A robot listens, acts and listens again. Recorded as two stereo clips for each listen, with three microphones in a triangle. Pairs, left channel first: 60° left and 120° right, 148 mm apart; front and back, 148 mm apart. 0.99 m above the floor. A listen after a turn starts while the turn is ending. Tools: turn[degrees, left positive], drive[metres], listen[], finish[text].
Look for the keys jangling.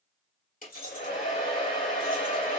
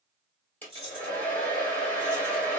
Thought: The keys jangling: 50° left.
Action: turn[50]
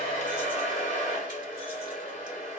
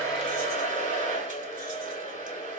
Action: listen[]
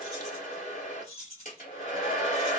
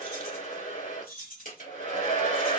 Thought: The keys jangling is now 15° left.
Action: turn[15]
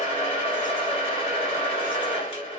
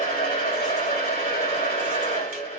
Action: listen[]
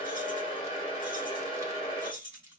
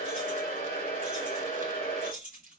Action: finish[Found it: keys jangling, straight ahead, over 4 m away.]